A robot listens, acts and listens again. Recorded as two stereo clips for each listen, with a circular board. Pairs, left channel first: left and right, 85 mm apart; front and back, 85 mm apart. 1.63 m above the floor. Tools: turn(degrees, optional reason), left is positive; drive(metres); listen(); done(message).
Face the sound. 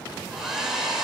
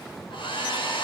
done("Facing the hair dryer.")